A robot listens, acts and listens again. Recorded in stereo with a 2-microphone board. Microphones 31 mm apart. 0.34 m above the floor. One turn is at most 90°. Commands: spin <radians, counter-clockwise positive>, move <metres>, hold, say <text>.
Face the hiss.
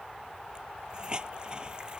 spin -0.44
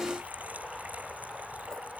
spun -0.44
hold
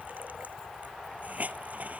spin -1.57
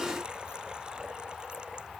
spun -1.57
spin -0.70
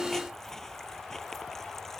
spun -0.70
hold
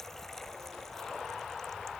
say Facing where the hiss came from. I can't hear it now.